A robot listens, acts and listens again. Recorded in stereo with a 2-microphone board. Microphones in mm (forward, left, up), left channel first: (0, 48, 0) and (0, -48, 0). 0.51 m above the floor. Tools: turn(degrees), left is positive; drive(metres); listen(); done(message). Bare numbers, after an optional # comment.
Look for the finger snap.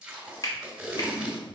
# The finger snap: about 45° left or 135° left.
turn(45)
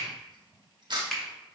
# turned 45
done("Found it: a finger snap, straight ahead, 1 to 2 m away.")